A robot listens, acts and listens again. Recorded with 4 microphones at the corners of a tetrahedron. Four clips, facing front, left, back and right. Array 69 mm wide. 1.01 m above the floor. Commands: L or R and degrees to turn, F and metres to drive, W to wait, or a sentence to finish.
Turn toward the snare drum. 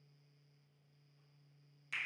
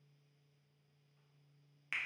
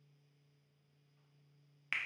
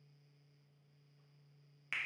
W
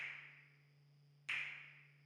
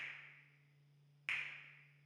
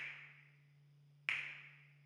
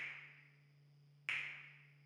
W
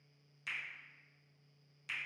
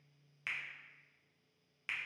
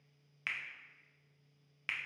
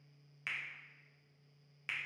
I can't make out a snare drum, only a finger snap.